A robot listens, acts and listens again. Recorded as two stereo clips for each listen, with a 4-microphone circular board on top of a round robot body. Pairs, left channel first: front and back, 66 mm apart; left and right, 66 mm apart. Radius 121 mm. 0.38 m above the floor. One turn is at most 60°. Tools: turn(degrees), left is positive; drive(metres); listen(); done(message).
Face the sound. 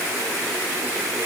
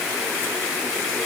listen()
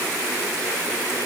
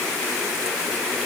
listen()
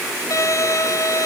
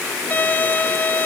turn(degrees=30)
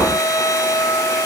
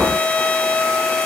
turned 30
turn(degrees=20)
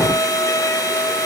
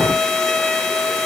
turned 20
turn(degrees=10)
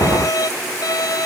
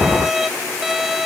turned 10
done("Facing the violin.")